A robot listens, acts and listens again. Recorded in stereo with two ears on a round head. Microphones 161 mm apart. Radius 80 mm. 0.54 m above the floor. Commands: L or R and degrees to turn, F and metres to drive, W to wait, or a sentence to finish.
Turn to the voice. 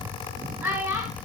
R30
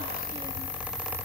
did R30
W
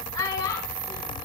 L20
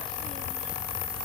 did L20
W
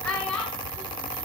Facing the child speaking.